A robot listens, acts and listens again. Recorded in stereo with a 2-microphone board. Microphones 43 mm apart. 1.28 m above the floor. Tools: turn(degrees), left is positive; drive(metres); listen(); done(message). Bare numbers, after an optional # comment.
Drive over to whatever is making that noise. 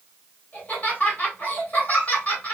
# The laughter: about 35° left or 145° left.
turn(35)
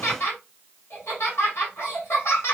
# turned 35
# So it is at 110° left.
turn(110)
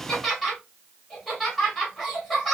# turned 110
drive(1.0)
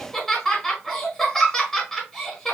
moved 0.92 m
# The laughter is now 10° left.
turn(10)
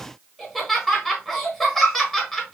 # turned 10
drive(1.0)
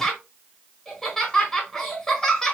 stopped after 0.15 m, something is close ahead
# The laughter is now 10° left.
turn(10)
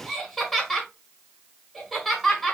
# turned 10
done("I am next to the laughter.")